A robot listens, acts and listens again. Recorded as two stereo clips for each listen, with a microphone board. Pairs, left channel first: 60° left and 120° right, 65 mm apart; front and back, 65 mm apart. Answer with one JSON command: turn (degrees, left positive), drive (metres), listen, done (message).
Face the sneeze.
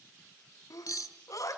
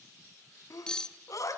{"turn": 30}
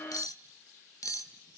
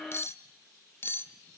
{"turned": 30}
{"done": "I heard a sneeze from this way, but can't make it out now."}